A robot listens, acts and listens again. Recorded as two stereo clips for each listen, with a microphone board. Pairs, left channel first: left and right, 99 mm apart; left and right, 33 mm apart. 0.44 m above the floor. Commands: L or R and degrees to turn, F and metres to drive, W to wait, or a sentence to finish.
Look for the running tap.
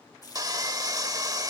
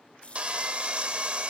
L35
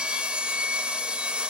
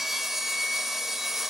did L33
W
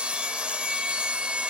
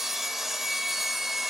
W
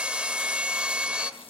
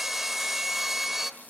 I heard a running tap, but can't make it out now. It was about 5° left or 110° left.